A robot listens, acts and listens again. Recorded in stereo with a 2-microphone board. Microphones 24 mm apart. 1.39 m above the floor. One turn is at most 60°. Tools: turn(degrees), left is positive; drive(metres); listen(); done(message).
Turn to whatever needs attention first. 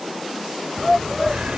turn(degrees=-30)
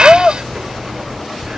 turn(degrees=15)
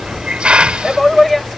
done("Facing the shout.")